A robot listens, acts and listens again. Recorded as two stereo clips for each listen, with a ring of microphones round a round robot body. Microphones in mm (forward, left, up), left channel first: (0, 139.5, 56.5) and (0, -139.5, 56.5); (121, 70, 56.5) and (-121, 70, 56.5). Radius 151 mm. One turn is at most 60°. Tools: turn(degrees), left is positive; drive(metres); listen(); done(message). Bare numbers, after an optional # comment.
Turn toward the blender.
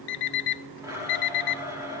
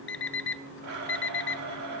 # The blender: 170° right.
turn(-60)
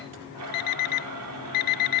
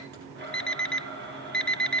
# The blender is now 125° right.
turn(-60)
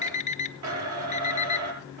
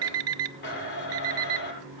# The blender is now 55° right.
turn(-55)
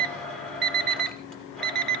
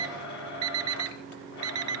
done("Found it: a blender, straight ahead.")